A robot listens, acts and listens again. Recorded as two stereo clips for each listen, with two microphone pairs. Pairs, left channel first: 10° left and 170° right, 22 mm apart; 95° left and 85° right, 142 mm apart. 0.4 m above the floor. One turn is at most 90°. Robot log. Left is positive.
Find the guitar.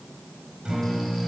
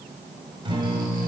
note: The guitar: 130° right.
cmd yaw -90
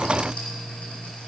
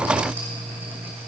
note: The guitar is now 65° right.
cmd yaw -65
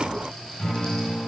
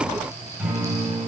end: Facing the guitar, 2 to 4 m away.